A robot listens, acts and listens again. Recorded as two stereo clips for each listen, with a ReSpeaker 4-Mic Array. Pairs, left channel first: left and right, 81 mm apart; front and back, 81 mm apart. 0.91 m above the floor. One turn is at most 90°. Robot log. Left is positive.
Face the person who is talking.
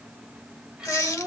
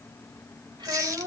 note: The child speaking: 170° right.
cmd yaw -90
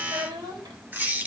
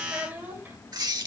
note: The child speaking is now 110° right.
cmd yaw -90
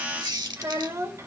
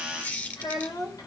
note: The child speaking is now 35° right.
cmd yaw -35
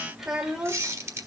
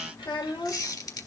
end: Found it: a child speaking, straight ahead, 2 to 4 m away.